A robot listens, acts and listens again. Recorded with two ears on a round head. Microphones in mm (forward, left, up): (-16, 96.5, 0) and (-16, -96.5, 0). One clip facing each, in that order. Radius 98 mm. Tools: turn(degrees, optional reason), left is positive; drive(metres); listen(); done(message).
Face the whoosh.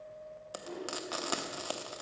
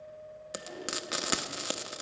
turn(degrees=65, reason="The whoosh: about 65° left or 115° left.")
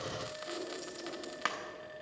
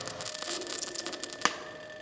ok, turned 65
listen()
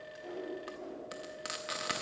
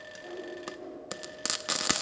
done("Facing the whoosh, 2 to 4 m away.")